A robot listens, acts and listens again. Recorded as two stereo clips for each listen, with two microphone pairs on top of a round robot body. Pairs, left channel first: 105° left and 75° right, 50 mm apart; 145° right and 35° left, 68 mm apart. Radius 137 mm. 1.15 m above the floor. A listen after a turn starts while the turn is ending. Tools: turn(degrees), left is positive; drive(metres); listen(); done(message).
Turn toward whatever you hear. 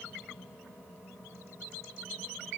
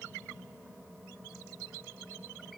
listen()
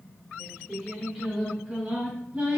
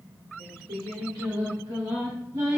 turn(degrees=-15)
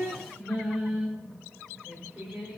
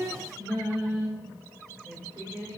turn(degrees=-20)
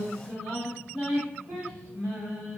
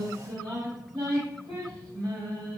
done("Found it: singing, straight ahead, 2 to 4 m away.")